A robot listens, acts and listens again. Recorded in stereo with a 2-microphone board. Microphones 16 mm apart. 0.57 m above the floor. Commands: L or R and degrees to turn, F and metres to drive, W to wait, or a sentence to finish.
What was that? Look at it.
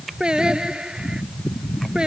R90
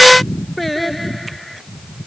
L10
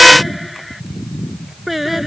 Facing the singing.